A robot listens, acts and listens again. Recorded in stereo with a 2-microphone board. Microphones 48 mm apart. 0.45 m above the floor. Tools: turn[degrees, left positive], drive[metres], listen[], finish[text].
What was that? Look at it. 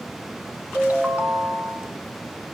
Thought: The ringtone: about 35° right or 145° right.
Action: turn[-35]
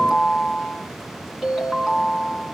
Action: finish[Found it: a ringtone, straight ahead.]